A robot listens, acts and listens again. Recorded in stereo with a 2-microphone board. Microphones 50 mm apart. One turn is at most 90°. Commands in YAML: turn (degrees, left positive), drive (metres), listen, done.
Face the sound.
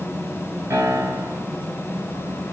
turn: -90
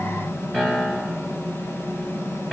turn: -10
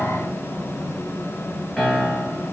done: "Found it: a piano, straight ahead, 1 to 2 m away."